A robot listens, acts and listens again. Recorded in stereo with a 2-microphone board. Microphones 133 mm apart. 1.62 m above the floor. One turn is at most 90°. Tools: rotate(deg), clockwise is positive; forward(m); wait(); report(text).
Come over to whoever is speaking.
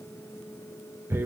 wait()
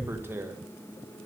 wait()
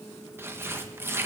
report("I can't make out anyone speaking to turn to.")